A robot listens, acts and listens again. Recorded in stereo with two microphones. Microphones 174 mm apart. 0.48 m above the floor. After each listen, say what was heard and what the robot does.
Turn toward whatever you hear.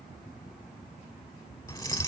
The keys jangling: about 20° left or 160° left. Turn 20° left.
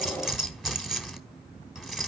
Found it: keys jangling, straight ahead.